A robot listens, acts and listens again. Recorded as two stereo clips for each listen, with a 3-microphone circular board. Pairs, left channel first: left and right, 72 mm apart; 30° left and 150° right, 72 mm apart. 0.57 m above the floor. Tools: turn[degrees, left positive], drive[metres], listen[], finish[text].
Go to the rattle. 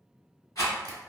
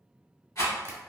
Thought: The rattle: 60° left.
Action: turn[60]
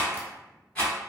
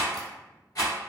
Thought: The rattle is now 15° left.
Action: turn[15]
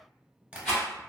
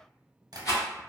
Action: drive[1.0]
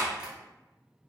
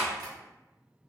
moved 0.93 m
Action: listen[]
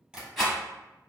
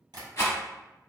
Action: drive[1.0]
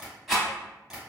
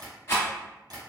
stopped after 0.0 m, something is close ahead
Action: finish[I am next to the rattle.]